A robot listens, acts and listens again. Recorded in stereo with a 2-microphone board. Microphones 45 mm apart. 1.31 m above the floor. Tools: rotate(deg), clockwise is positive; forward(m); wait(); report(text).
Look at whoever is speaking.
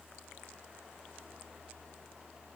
wait()
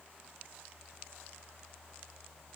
wait()
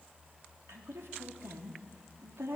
rotate(75)
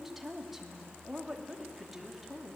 report("Facing the woman speaking, 2 to 4 m away.")